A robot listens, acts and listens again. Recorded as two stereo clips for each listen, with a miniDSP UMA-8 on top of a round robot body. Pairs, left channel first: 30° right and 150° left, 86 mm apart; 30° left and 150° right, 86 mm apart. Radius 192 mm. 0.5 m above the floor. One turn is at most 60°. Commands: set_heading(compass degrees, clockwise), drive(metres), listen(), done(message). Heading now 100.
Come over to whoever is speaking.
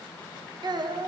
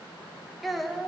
set_heading(40)
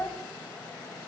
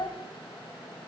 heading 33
set_heading(343)
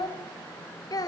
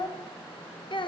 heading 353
set_heading(343)
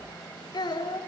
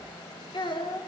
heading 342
drive(1.0)
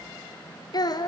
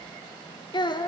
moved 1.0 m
drive(1.0)
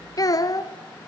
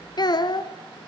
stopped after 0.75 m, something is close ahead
done("Arrived at the child speaking, straight ahead.")